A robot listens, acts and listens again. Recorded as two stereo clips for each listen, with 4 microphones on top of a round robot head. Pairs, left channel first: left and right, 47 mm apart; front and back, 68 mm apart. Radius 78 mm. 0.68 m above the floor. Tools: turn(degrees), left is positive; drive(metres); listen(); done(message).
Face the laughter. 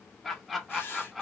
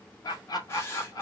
done("Facing the laughter, 1 to 2 m away.")